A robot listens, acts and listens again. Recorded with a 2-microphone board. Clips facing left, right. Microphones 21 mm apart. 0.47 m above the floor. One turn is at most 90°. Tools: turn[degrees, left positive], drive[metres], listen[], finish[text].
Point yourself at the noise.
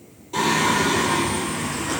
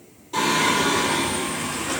Action: turn[30]
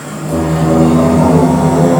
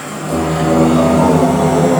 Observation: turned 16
Action: turn[-30]
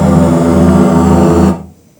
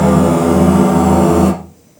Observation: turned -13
Thought: So it is at 20° left.
Action: turn[20]
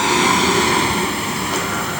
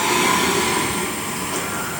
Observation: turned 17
Thought: The singing is now 40° left.
Action: turn[40]
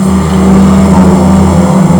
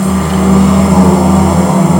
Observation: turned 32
Thought: The singing is now 10° left.
Action: turn[10]
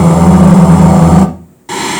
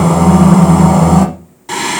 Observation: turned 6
Action: finish[Facing the singing, 1 to 2 m away.]